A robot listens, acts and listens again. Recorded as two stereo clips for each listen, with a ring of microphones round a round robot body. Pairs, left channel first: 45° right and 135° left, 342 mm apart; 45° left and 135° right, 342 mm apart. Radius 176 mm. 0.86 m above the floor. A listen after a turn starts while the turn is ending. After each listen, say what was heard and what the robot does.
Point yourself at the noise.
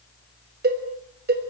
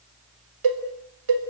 The cowbell: 160° right. Turn 160° right.
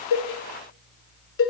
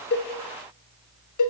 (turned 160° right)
The cowbell is now 10° left. Turn 10° left.
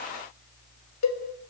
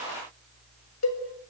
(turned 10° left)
Facing the cowbell, 2 to 4 m away.